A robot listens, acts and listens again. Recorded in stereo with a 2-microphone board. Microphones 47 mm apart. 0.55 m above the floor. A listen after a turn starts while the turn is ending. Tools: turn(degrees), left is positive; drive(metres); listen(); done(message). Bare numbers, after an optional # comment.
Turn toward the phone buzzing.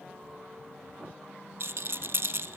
listen()
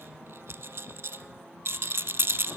listen()
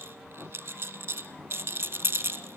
done("I can't make out a phone buzzing to turn to.")